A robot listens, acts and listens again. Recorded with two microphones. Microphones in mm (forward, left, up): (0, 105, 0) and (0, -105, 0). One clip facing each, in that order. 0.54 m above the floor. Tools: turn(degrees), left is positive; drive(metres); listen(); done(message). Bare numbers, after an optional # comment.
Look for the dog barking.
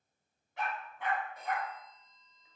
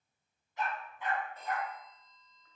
# The dog barking: about 70° left or 110° left.
turn(70)
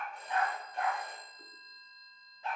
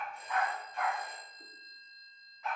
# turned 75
# So it is at 35° left.
turn(35)
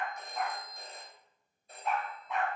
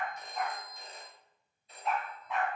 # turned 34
done("Facing the dog barking.")